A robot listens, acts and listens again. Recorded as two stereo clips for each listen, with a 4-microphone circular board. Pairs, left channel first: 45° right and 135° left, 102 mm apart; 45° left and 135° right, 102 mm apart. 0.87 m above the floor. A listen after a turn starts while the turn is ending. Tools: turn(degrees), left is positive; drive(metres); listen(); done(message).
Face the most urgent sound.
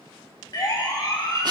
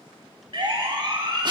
turn(degrees=-95)
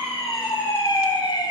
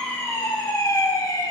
done("Found it: a siren, straight ahead, 2 to 4 m away.")